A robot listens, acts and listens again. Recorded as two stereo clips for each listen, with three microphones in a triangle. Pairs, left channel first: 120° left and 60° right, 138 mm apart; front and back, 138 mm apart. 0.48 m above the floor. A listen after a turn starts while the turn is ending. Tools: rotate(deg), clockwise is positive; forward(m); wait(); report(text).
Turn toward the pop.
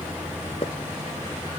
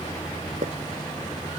rotate(-165)
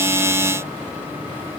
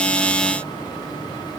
report("Facing where the pop came from. I can't hear it now.")